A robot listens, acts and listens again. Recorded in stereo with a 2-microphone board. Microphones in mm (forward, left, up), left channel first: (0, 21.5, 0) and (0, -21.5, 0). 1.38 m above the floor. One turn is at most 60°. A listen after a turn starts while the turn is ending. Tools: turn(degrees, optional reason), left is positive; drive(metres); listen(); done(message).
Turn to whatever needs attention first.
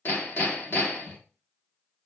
listen()
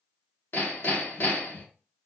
listen()
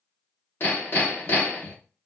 done("I can't make out anything urgent to turn to.")